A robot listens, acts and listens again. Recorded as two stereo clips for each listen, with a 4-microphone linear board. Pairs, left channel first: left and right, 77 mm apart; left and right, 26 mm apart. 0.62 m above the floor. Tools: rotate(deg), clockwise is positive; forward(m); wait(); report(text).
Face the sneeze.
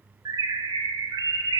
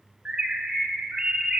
wait()
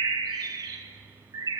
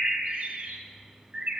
wait()
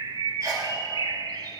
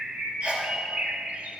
rotate(50)
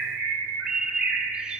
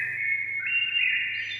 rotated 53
wait()
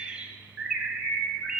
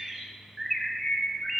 report("I heard a sneeze, but can't make it out now. It was about straight ahead or 75° right.")